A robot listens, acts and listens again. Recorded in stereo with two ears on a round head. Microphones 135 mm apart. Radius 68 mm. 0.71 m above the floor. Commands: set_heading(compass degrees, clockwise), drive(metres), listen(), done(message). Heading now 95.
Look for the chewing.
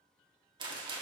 listen()
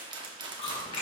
set_heading(55)
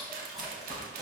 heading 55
done("Facing the chewing.")